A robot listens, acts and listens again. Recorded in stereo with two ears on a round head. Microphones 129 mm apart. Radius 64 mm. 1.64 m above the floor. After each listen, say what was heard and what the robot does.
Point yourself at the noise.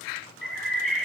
Turn 30° left.
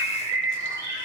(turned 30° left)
So it is at 25° right. Turn 25° right.
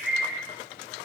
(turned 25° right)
Facing the bird, 2 to 4 m away.